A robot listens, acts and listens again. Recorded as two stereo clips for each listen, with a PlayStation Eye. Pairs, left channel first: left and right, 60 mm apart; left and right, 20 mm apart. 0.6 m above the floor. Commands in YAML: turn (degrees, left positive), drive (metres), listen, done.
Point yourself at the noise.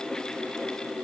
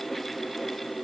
listen: true
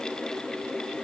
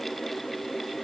listen: true
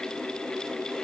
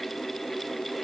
done: "I can't make out anything."